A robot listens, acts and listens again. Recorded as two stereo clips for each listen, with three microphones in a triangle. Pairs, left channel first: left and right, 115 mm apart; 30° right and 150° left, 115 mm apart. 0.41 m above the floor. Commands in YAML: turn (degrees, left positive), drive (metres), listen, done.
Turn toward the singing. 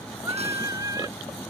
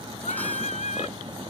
turn: -30
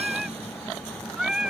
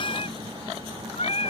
done: "Found it: singing, straight ahead."